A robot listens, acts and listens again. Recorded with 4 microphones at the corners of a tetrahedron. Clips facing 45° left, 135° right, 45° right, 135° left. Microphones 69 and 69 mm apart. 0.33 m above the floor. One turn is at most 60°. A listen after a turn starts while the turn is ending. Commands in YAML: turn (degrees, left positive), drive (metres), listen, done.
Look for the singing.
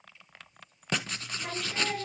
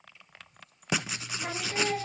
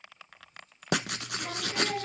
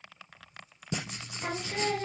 turn: 60
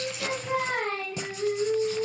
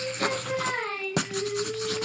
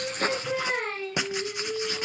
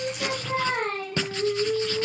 turn: 60
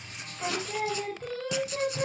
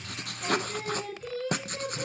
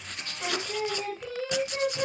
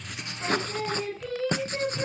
turn: 30
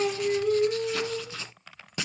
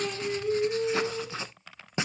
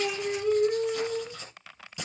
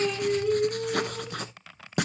done: "Found it: singing, straight ahead, over 4 m away."